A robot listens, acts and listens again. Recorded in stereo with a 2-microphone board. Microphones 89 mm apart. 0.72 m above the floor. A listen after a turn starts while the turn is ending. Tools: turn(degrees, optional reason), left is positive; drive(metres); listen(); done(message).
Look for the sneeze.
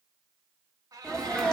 turn(degrees=30)
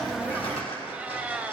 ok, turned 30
listen()
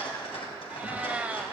done("I heard a sneeze, but can't make it out now. It was about 25° right or 145° left.")